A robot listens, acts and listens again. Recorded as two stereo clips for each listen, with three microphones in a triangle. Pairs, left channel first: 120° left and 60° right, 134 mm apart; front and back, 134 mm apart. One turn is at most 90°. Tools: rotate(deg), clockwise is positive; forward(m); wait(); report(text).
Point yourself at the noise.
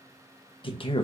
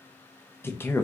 rotate(-75)
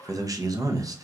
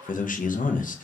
report("Facing the man speaking.")